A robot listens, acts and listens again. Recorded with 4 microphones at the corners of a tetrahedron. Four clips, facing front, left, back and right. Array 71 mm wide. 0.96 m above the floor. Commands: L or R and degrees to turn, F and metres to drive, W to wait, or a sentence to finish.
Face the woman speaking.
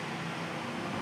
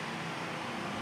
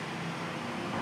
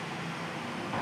W
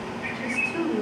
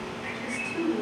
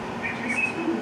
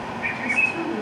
Facing the woman speaking.